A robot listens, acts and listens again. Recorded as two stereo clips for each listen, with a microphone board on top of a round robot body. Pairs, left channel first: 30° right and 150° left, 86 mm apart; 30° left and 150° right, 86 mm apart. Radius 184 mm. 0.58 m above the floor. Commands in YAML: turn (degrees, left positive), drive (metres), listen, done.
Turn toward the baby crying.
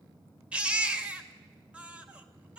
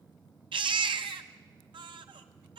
turn: -135
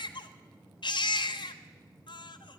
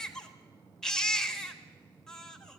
turn: -55
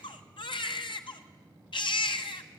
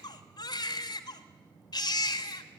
turn: -10
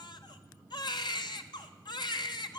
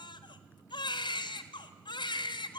done: "Found it: a baby crying, straight ahead, 1 to 2 m away."